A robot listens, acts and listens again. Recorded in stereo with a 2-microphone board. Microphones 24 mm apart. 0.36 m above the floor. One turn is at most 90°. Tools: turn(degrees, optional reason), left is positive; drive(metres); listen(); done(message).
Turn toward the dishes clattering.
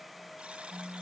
listen()
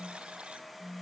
listen()
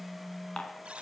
turn(degrees=40, reason="The dishes clattering: about 40° left or 140° left.")
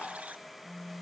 turn(degrees=90, reason="So it is at 105° left.")
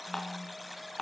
turn(degrees=20, reason="The dishes clattering is now 20° left.")
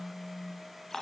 done("Found it: dishes clattering, straight ahead.")